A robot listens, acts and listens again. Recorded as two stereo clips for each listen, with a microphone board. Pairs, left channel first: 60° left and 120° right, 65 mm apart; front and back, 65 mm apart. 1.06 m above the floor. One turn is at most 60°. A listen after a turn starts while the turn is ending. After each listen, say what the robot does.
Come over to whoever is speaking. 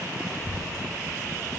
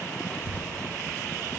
Turn 60° left.
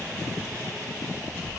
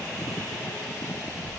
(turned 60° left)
Turn 15° left.
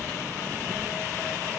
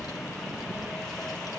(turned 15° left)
Drive 1.0 m forward.
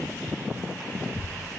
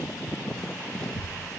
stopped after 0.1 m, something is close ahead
Blocked. The child speaking is further on, straight ahead.